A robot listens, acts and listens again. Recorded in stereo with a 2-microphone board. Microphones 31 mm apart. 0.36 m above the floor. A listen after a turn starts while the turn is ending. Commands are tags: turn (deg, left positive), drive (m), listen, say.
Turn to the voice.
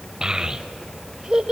<turn deg="-25"/>
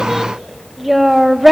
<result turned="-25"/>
<say>Facing the child speaking.</say>